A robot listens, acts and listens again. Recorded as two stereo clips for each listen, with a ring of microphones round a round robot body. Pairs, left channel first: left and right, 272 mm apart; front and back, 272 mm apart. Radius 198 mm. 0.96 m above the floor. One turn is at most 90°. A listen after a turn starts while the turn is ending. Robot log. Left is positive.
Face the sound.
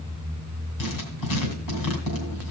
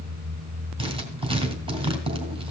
note: The writing: 110° left.
cmd yaw +90
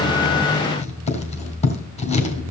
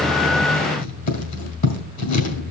note: The writing is now 25° left.
cmd yaw +25
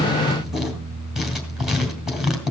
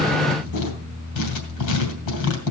end: Facing the writing.